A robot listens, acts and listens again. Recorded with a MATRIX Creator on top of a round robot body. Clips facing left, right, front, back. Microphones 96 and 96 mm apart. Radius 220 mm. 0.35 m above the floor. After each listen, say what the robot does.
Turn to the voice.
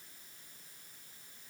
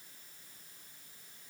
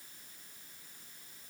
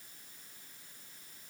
Keep listening.
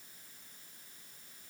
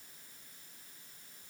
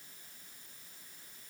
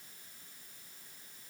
Keep listening.
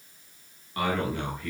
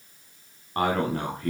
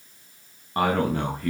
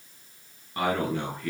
Turn 40° right.
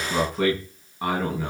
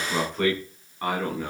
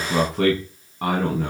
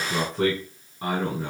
Turn 10° left.
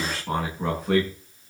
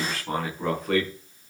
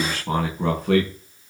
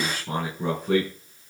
Found it: a man speaking, straight ahead.